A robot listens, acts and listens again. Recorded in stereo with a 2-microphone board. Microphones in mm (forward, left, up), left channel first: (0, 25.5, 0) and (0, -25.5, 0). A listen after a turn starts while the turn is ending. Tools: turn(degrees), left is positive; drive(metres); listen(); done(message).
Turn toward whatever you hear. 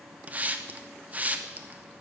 turn(degrees=-30)
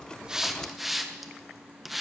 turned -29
done("Found it: a hiss, straight ahead, under 1 m away.")